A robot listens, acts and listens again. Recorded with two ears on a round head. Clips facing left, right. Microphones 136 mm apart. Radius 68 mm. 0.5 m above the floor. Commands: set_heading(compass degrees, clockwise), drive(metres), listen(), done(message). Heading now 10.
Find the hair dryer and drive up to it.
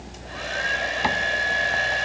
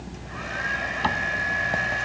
set_heading(330)
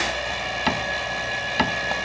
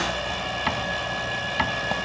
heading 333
drive(1.0)
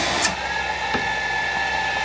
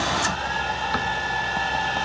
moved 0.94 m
set_heading(318)
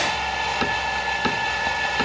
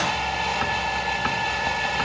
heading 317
drive(1.0)
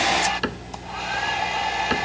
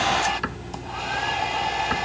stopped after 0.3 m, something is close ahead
done("Arrived at the hair dryer, straight ahead.")